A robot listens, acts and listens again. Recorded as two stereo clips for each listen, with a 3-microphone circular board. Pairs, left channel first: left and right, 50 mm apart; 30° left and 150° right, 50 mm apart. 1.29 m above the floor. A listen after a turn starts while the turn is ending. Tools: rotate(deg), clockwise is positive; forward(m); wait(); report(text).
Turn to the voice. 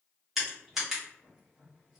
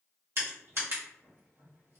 wait()
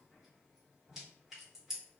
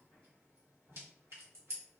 wait()
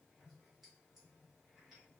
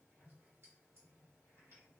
report("I can't make out anyone speaking to turn to.")